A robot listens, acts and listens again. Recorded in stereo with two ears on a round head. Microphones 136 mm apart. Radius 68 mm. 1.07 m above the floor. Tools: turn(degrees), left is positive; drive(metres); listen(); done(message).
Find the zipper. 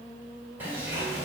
turn(degrees=-30)
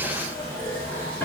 turn(degrees=15)
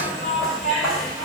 done("Facing the zipper, 1 to 2 m away.")